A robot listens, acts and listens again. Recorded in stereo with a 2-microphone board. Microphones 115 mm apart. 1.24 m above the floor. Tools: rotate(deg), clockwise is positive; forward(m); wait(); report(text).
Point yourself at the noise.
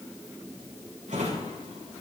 rotate(90)
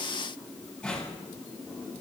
report("Facing the drawer, over 4 m away.")